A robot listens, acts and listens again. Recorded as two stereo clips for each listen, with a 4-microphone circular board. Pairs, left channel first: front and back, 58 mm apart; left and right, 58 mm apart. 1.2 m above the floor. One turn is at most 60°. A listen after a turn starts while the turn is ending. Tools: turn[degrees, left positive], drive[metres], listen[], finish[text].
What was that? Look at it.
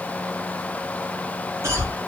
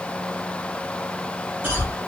Thought: The cough: 145° right.
Action: turn[-60]
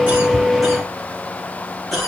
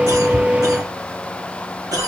Thought: The cough is now 90° right.
Action: turn[-60]
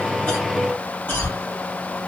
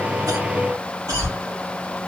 Thought: The cough is now 55° right.
Action: turn[-55]
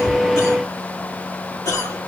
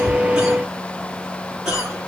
Thought: The cough is now 10° right.
Action: turn[-10]
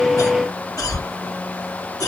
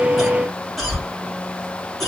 Action: finish[Facing the cough, 1 to 2 m away.]